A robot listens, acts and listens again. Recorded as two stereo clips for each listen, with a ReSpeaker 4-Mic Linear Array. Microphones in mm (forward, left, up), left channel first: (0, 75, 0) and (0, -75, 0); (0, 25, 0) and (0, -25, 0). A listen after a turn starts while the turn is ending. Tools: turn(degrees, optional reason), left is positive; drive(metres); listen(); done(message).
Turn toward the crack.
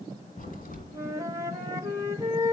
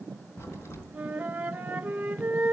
turn(degrees=65, reason="The crack: about 65° left or 115° left.")
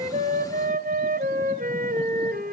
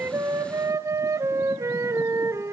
listen()
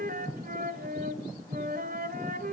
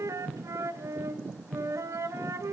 done("I heard a crack, but can't make it out now. It was about straight ahead or 50° left.")